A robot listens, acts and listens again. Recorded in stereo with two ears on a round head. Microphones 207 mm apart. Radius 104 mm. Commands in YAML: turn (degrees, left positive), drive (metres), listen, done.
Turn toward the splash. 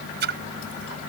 turn: -50
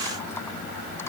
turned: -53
listen: true
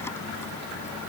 done: "I heard a splash, but can't make it out now. It was about 5° left or 80° right."